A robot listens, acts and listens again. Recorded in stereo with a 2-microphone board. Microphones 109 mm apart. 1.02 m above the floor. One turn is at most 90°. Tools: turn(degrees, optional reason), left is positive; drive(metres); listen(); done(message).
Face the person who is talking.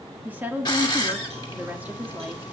turn(degrees=-15, reason="The woman speaking: about 15° right or 165° right.")
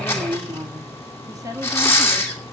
turn(degrees=-90, reason="So it is at 150° right.")
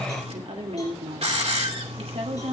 turn(degrees=-60, reason="The woman speaking is now 60° right.")
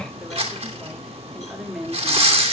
done("Found it: a woman speaking, straight ahead.")